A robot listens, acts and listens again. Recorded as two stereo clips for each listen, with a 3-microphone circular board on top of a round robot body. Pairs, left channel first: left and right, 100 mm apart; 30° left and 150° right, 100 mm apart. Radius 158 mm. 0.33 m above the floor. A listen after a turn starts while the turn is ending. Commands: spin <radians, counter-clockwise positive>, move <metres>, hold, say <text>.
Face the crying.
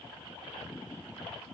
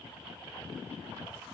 hold
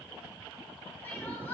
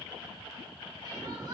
spin 2.79
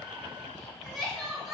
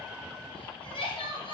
say Facing the crying.